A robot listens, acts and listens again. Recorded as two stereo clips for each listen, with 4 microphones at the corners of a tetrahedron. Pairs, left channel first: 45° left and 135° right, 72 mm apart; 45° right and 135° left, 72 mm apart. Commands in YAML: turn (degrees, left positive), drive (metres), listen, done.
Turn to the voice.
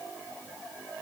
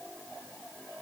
listen: true
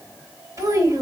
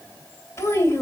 turn: -100
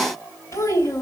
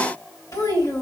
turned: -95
done: "Found it: a child speaking, straight ahead, 2 to 4 m away."